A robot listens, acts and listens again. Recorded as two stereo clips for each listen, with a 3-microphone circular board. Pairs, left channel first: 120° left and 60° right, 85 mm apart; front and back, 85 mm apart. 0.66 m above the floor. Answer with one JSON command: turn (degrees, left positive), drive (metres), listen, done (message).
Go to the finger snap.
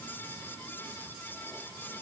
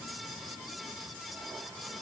{"listen": true}
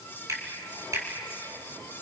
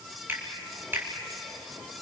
{"turn": -115}
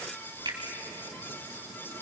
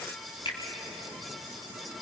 {"turn": -25}
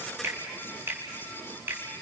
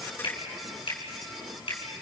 {"drive": 1.0}
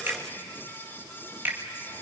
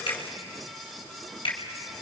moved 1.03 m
{"turn": 10}
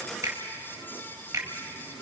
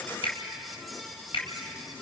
{"drive": 1.0}
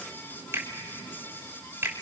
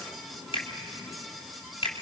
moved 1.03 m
{"drive": 1.0}
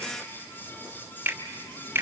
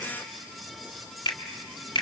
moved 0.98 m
{"drive": 1.0}
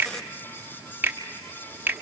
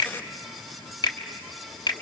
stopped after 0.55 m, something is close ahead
{"done": "Arrived at the finger snap, straight ahead."}